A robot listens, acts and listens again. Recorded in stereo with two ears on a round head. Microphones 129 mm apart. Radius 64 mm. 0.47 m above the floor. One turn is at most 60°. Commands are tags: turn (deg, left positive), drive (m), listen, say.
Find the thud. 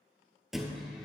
<turn deg="-30"/>
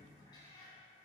<listen/>
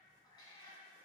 <say>I heard a thud, but can't make it out now. It was about 25° left or 145° right.</say>